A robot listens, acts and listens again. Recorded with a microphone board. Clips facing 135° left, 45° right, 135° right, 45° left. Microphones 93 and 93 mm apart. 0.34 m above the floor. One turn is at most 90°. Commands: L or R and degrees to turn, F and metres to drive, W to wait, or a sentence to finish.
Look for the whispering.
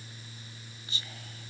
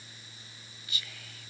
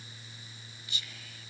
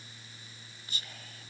L85
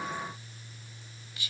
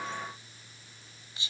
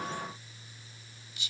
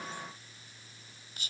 L15
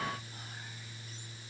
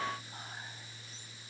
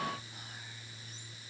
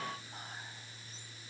W
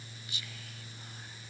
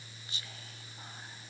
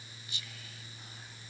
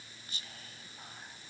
Facing the whispering, 1 to 2 m away.